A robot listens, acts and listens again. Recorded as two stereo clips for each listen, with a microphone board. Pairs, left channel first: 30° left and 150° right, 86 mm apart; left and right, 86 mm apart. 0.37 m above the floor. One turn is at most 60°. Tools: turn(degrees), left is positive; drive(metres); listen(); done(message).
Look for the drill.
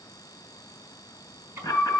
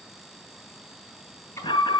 listen()
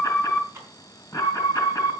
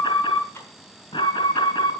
listen()
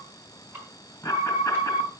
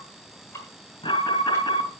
done("I can't make out a drill to turn to.")